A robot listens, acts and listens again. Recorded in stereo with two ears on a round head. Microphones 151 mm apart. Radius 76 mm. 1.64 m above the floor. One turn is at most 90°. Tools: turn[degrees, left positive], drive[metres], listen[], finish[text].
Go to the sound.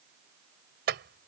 Thought: The clink: about 70° right or 110° right.
Action: turn[-70]
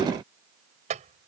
Thought: So it is at 45° right.
Action: turn[-45]
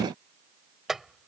Action: drive[1.0]
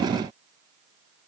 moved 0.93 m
Action: listen[]
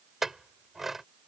Action: drive[1.0]
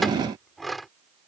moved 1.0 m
Action: drive[1.0]
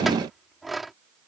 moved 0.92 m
Action: drive[1.0]
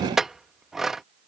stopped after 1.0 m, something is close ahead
Action: finish[I am next to the clink.]